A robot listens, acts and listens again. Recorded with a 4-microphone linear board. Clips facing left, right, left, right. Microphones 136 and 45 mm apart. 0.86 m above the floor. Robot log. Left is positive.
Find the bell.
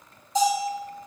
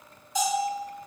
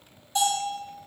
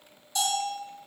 note: The bell: about 30° left or 150° left.
cmd yaw +30
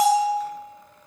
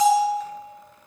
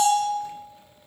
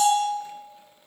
note: So it is at 120° left.
cmd yaw +120
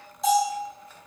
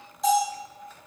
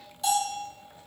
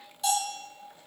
end: Found it: a bell, straight ahead.